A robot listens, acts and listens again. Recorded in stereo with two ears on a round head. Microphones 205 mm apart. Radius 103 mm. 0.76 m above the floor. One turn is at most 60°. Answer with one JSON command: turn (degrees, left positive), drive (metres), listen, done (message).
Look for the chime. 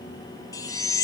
{"turn": 15}
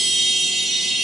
{"done": "Facing the chime, 1 to 2 m away."}